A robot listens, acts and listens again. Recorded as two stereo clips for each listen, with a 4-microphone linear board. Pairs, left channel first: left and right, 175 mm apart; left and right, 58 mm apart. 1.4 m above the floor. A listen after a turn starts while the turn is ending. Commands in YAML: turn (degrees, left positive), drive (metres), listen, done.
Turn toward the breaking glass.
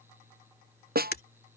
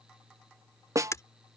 turn: 65
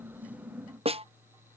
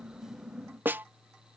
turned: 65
listen: true
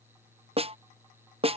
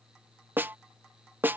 done: "I heard breaking glass, but can't make it out now. It was about straight ahead or 50° left."